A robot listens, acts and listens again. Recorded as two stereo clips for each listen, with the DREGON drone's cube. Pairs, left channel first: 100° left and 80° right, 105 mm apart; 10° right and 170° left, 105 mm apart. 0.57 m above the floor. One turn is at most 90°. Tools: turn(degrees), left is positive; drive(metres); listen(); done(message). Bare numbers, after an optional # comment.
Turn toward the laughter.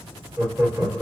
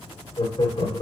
# The laughter: 30° right.
turn(-30)
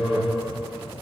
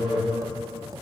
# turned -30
# The laughter is now 10° right.
turn(-10)
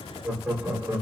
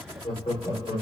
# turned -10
# The laughter is now 15° right.
turn(-15)
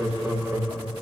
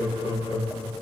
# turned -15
# The laughter is now 10° right.
turn(-10)
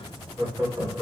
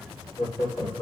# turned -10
done("Found it: laughter, straight ahead.")